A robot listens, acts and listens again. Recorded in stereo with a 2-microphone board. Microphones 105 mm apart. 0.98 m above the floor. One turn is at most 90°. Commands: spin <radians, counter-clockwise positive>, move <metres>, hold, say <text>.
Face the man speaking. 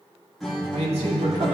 spin -1.57
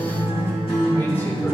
hold
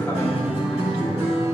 spin 0.44
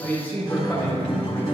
spin 0.35
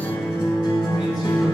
hold
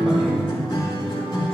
hold
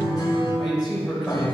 say Found it: a man speaking, straight ahead, over 4 m away.